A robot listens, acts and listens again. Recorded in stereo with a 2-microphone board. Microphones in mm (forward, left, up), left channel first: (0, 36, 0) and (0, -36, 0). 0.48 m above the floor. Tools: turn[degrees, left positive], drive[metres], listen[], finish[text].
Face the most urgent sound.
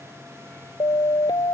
Action: turn[90]
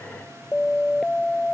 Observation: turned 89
Action: finish[Facing the siren.]